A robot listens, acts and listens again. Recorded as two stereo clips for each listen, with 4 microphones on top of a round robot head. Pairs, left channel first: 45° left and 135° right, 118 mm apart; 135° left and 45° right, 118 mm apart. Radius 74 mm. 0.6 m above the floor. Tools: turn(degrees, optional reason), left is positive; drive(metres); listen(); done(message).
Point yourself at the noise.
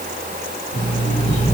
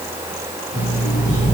turn(degrees=10, reason="The alarm clock: 10° left.")
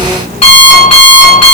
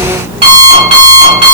done("Facing the alarm clock.")